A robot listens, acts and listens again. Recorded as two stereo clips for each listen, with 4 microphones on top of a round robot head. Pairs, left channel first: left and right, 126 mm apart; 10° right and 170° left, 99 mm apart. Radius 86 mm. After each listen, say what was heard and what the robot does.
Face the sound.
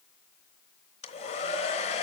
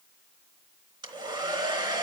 The hair dryer: 130° left. Turn 130° left.
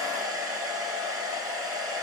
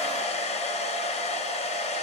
Found it: a hair dryer, straight ahead, 2 to 4 m away.